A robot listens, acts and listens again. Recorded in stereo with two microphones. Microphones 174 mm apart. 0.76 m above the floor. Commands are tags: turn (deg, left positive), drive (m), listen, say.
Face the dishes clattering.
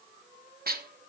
<turn deg="-60"/>
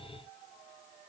<listen/>
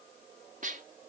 <turn deg="-55"/>
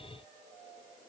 <listen/>
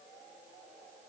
<listen/>
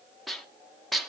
<say>Found it: dishes clattering, straight ahead, under 1 m away.</say>